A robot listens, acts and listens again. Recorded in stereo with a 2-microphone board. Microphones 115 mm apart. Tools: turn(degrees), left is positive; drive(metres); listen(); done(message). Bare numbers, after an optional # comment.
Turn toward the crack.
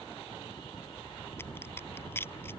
# The crack: about 20° left or 160° left.
turn(20)
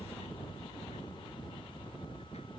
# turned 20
listen()
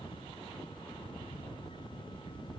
done("I heard a crack, but can't make it out now. It was about straight ahead or 140° left.")